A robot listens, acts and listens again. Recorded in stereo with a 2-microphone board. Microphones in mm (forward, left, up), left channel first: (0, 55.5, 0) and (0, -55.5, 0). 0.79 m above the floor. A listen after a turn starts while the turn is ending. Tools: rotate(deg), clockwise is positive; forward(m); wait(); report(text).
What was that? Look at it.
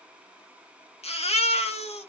rotate(-70)
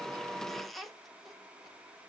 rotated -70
wait()
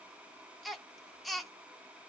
report("Found it: a baby crying, straight ahead, under 1 m away.")